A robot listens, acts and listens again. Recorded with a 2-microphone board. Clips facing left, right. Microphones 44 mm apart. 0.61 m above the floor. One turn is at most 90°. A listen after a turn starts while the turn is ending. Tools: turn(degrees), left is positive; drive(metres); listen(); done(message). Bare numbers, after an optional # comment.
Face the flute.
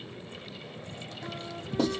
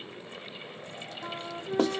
# The flute: about 40° right or 140° right.
turn(-40)
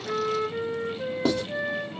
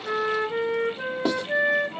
# So it is at 100° right.
turn(-90)
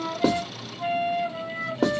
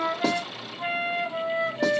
# The flute is now 30° right.
turn(-30)
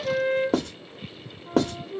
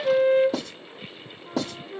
# The flute is now 10° right.
turn(-10)
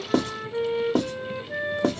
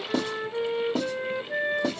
done("Found it: a flute, straight ahead.")